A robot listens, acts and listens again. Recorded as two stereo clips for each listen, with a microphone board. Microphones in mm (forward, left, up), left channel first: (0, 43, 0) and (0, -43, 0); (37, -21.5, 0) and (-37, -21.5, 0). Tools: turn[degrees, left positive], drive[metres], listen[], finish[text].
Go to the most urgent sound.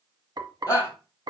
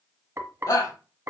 Thought: The shout: 30° left.
Action: turn[30]
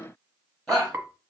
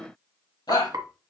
Action: drive[1.0]
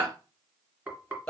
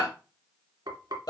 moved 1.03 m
Thought: The shout is now 10° left.
Action: turn[10]
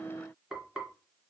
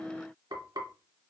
Action: listen[]
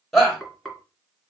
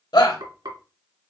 Action: drive[1.0]
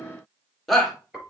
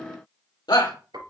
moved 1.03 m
Action: drive[1.0]
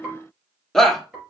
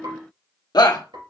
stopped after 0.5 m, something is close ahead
Action: finish[I am next to the shout.]